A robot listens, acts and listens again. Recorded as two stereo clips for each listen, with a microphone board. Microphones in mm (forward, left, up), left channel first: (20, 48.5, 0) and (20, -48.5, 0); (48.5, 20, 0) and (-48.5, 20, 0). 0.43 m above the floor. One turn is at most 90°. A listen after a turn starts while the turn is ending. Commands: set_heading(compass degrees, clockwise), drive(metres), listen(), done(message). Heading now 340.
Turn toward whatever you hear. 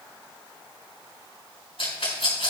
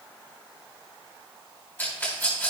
set_heading(270)
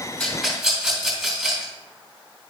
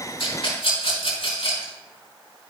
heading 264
done("Found it: a rattle, straight ahead.")